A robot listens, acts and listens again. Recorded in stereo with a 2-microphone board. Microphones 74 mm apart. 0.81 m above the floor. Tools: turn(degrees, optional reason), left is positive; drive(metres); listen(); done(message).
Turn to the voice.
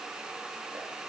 listen()
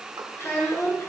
turn(degrees=35, reason="The child speaking: about 35° left or 145° left.")
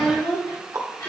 turn(degrees=105, reason="So it is at 105° left.")
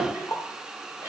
turn(degrees=-25, reason="The child speaking is now 25° right.")
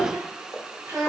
turn(degrees=-15, reason="The child speaking is now 15° right.")
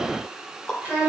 done("Facing the child speaking.")